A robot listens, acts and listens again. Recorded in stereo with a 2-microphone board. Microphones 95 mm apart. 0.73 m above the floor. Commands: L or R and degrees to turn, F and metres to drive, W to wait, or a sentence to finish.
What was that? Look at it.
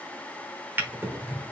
R25
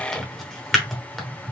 Found it: a drawer, straight ahead.